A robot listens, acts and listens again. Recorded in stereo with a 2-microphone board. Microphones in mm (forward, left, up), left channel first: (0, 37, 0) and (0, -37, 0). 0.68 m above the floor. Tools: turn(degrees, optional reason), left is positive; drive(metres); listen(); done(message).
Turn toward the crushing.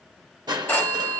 turn(degrees=-65, reason="The crushing: about 65° right or 115° right.")
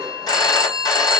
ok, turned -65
listen()
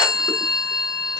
listen()
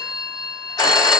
done("I heard crushing, but can't make it out now. It was about straight ahead or 50° right.")